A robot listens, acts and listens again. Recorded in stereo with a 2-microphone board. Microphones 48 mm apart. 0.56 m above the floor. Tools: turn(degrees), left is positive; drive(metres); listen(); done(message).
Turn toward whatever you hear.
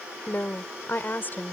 turn(degrees=40)
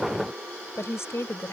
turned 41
turn(degrees=115)
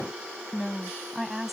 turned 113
done("Facing the woman speaking.")